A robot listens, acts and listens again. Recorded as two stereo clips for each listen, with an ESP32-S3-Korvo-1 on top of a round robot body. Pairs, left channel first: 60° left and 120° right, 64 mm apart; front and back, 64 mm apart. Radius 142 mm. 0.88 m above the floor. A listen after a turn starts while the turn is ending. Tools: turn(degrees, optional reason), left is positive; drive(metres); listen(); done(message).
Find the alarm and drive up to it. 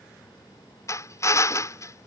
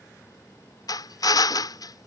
listen()
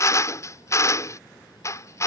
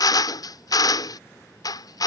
listen()
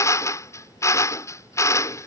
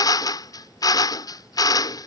done("I can't make out an alarm to turn to.")